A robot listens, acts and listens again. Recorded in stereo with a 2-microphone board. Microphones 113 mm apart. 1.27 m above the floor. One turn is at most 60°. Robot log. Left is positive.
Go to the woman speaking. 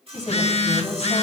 note: The woman speaking: about 75° left or 105° left.
cmd yaw +60
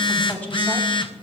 note: So it is at 15° left.
cmd yaw +15
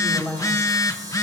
cmd fwd 1.0
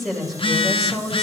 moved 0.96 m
cmd fwd 1.0
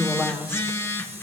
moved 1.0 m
cmd fwd 1.0
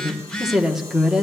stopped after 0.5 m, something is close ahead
end: Arrived at the woman speaking, straight ahead.